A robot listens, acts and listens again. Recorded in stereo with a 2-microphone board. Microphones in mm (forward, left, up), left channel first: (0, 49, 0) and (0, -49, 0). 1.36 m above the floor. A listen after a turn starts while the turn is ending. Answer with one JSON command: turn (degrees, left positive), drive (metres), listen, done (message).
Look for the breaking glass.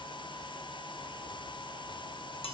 {"listen": true}
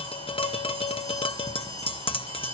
{"listen": true}
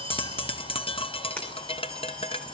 {"turn": 30}
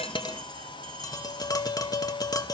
{"listen": true}
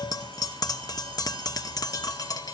{"done": "I heard breaking glass, but can't make it out now. It was about 20° right or 140° left."}